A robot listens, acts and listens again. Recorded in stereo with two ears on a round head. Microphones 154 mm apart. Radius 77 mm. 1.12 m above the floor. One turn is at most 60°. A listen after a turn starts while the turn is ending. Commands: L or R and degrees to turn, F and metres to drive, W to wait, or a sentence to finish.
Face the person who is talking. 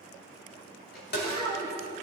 L20
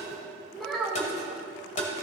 Found it: a child speaking, straight ahead, 2 to 4 m away.